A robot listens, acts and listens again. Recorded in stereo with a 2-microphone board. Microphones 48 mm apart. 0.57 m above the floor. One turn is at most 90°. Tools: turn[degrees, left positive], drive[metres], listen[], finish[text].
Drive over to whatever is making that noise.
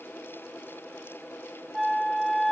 Action: turn[30]
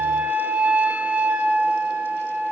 Thought: So it is at 35° right.
Action: turn[-35]
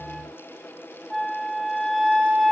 Action: drive[1.0]
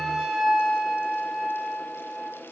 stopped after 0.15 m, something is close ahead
Action: finish[Something is in my way. I am facing the flute but have not reached it.]